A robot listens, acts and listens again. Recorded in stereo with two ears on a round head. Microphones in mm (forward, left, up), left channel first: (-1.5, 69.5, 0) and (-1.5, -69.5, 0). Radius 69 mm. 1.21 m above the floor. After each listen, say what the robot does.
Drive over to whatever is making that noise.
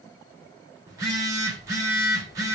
Turn 20° right.
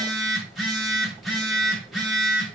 Drive 1.0 m forward.
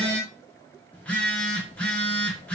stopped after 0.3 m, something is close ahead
Turn 10° left.
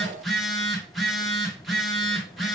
Blocked. The phone buzzing is further on, straight ahead.